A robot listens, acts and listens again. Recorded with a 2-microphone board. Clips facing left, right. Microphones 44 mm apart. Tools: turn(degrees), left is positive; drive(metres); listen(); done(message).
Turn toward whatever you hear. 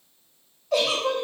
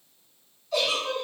turn(degrees=60)
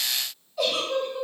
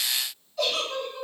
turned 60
turn(degrees=10)
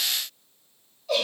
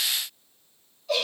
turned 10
done("Facing the giggle, under 1 m away.")